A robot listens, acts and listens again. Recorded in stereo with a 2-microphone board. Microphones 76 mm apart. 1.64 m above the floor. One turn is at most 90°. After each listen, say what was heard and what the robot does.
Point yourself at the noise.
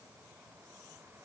Keep listening.
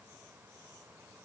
Keep listening.
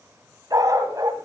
The dog barking: about 55° right or 125° right. Turn 55° right.
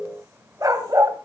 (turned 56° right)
So it is at 50° right. Turn 50° right.
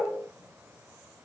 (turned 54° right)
Keep listening.
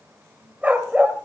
The dog barking is now 20° right. Turn 20° right.
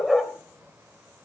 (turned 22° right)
Found it: a dog barking, straight ahead, 2 to 4 m away.